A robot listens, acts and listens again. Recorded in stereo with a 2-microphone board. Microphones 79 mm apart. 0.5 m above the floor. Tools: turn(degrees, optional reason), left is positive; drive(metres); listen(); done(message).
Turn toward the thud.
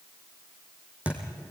turn(degrees=-15, reason="The thud: about 15° right or 165° right.")
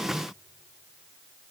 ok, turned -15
listen()
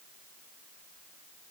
done("I heard a thud, but can't make it out now. It was about straight ahead or 150° right.")